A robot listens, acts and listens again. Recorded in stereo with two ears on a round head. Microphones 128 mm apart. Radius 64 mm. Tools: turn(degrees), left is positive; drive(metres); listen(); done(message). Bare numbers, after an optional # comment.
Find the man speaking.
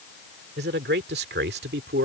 turn(-90)
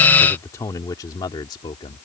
# So it is at 35° left.
turn(35)
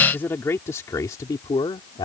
# The man speaking is now 30° left.
turn(30)
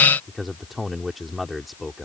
done("Found it: a man speaking, straight ahead.")